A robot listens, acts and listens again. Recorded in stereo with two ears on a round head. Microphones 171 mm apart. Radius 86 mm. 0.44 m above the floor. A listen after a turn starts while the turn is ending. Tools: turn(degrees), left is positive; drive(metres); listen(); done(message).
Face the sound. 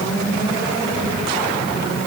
listen()
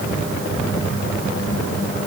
listen()
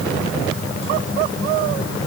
done("I can't make out anything.")